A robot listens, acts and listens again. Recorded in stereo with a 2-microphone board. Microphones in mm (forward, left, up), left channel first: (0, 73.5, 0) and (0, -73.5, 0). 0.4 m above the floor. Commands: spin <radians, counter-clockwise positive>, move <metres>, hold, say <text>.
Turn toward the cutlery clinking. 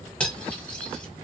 spin 0.52
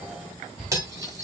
spin -0.44
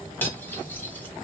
spin 0.26
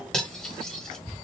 say Found it: cutlery clinking, straight ahead, 1 to 2 m away.